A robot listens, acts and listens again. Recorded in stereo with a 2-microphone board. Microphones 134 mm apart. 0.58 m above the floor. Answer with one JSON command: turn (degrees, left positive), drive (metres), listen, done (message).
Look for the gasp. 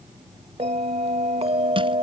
{"listen": true}
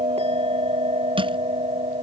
{"listen": true}
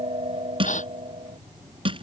{"turn": 60}
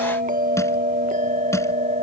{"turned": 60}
{"listen": true}
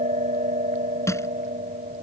{"done": "I heard a gasp, but can't make it out now. It was about straight ahead or 60° left."}